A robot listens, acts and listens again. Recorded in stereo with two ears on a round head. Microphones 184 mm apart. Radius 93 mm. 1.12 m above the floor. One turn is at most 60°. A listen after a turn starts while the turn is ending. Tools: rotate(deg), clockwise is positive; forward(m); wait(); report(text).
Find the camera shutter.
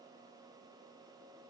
wait()
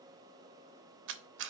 rotate(60)
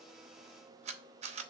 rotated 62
rotate(35)
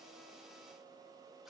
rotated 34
wait()
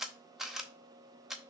report("Found it: a camera shutter, straight ahead, under 1 m away.")